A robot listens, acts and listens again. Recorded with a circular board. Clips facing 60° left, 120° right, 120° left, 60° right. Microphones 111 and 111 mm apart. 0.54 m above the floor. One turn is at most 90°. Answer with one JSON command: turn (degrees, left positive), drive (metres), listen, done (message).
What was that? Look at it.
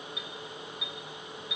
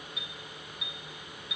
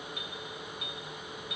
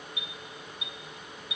{"turn": 90}
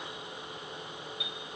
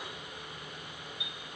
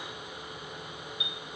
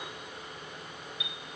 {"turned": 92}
{"turn": 60}
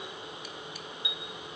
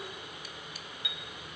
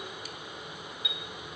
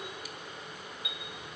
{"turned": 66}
{"done": "Facing the chime."}